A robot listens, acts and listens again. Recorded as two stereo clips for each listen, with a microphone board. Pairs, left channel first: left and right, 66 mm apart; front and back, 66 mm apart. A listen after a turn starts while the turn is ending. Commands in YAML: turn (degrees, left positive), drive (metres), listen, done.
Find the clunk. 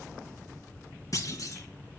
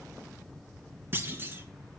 turn: 125
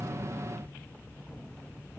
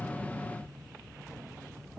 done: "I heard a clunk from this way, but can't make it out now."